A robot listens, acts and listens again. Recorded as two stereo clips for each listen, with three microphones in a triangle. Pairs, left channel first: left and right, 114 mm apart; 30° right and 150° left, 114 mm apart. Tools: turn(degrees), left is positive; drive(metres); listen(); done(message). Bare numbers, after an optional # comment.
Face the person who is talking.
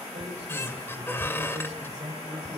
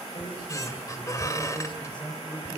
# The man speaking: 75° right.
turn(-75)
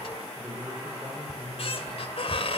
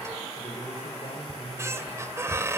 # The man speaking is now 10° right.
turn(-10)
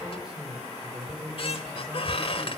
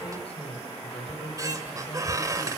done("Facing the man speaking.")